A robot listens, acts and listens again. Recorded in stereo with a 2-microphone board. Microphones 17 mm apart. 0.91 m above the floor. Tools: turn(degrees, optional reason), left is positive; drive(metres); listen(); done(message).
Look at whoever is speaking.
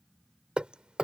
listen()
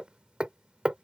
listen()
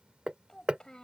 turn(degrees=45, reason="The child speaking: about 45° left or 135° left.")
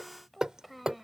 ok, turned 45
done("Facing the child speaking.")